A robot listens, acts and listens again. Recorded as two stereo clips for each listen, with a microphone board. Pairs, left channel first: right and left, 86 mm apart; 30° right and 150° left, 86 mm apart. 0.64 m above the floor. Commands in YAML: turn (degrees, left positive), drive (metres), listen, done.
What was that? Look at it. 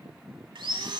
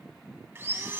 turn: 90
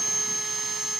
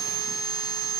done: "Found it: sawing, straight ahead."